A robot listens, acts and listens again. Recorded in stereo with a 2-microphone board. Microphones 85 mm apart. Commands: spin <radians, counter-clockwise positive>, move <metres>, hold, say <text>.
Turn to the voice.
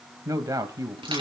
spin -0.79
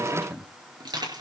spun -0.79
say Found it: a man speaking, straight ahead.